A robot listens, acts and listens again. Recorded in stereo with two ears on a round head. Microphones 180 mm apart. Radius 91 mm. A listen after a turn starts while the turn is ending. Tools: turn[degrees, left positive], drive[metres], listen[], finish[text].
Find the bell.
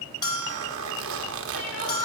Thought: The bell: about 20° left or 160° left.
Action: turn[20]
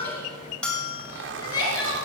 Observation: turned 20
Action: finish[Found it: a bell, straight ahead.]